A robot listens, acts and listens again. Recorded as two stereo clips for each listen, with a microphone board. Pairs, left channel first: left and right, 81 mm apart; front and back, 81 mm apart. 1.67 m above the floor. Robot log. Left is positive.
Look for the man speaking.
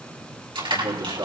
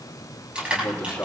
note: The man speaking: 70° right.
cmd yaw -70
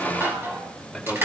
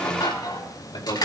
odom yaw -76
end: Facing the man speaking.